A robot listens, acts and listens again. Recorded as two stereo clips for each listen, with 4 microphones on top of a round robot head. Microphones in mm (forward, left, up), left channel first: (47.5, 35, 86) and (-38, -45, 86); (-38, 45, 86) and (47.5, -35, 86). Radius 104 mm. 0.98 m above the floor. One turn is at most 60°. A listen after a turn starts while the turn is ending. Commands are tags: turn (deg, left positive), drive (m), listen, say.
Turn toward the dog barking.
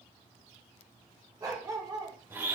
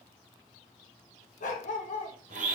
<turn deg="60"/>
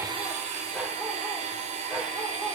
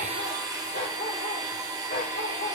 <turn deg="60"/>
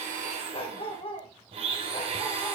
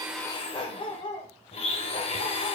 <turn deg="60"/>
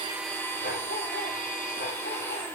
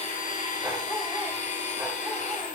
<turn deg="40"/>
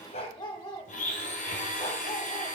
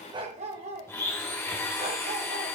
<turn deg="-10"/>
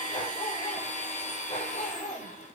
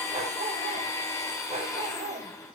<turn deg="-10"/>
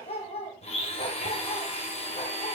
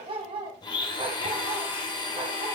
<say>Found it: a dog barking, straight ahead, 1 to 2 m away.</say>